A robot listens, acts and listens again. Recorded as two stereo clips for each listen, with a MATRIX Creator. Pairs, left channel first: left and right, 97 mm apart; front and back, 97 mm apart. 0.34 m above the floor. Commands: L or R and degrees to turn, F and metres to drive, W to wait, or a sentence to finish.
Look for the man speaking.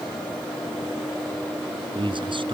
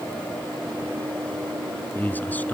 R70
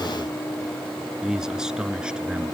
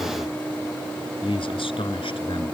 R10
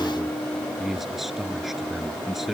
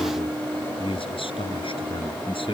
Facing the man speaking.